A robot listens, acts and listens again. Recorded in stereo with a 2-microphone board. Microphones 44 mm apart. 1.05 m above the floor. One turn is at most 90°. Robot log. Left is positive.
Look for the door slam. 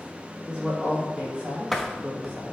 cmd yaw +30
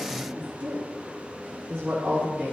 cmd idle
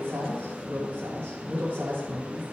end: I heard a door slam, but can't make it out now. It was about 30° right or 150° left.